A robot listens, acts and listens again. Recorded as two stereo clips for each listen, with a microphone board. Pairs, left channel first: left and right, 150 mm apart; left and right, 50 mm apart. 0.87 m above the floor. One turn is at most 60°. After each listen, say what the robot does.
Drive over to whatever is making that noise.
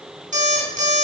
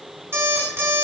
Turn 55° right.
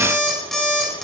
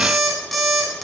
Drive 1.0 m forward.
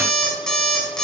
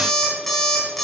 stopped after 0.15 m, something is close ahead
Something is in my way. I am facing the alarm clock but have not reached it.